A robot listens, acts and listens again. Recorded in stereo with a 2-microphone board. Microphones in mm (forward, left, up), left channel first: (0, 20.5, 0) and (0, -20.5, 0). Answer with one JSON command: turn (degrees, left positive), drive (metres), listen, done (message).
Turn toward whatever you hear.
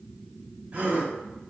{"turn": -40}
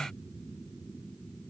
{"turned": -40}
{"listen": true}
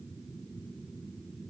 {"done": "I heard a gasp, but can't make it out now. It was about straight ahead or 100° right."}